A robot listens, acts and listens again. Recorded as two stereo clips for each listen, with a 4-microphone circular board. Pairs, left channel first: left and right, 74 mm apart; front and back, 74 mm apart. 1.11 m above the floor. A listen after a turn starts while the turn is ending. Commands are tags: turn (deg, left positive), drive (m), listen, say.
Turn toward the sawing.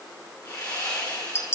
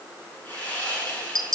<turn deg="65"/>
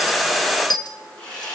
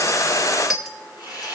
<turn deg="15"/>
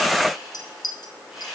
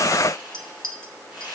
<say>Found it: sawing, straight ahead.</say>